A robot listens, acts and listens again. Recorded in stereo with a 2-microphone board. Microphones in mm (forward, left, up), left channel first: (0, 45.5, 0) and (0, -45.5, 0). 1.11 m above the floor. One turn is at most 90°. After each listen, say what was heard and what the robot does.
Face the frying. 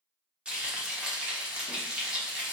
Turn 30° right.
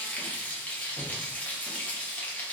So it is at 20° left. Turn 20° left.
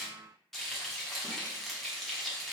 Facing the frying.